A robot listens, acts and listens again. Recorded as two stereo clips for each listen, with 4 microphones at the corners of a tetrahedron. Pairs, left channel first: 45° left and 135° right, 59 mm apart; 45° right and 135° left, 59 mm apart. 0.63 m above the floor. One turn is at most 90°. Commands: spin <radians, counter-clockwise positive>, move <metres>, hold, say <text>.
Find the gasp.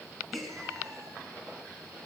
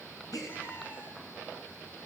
spin -0.70
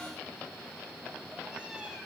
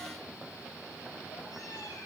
say Facing where the gasp came from. I can't hear it now.